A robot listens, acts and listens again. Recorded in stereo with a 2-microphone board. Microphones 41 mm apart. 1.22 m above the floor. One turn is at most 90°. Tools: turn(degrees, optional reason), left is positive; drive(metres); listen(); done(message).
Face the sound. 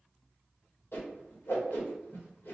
turn(degrees=65, reason="The whoosh: about 65° left or 115° left.")
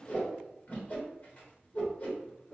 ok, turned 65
turn(degrees=45, reason="So it is at 45° left.")
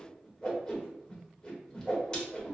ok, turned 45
turn(degrees=25, reason="The whoosh is now 25° left.")
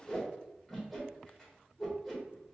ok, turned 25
turn(degrees=10, reason="The whoosh is now 10° left.")
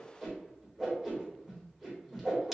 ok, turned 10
done("Facing the whoosh.")